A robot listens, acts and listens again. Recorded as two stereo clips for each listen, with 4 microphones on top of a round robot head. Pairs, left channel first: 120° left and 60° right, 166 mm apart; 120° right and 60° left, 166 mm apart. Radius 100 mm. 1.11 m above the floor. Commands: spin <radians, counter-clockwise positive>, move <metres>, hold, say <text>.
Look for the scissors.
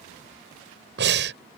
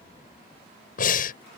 hold
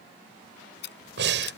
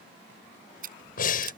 spin 1.75
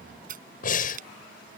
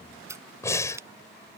spin -0.26
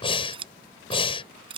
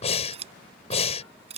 say Found it: scissors, straight ahead.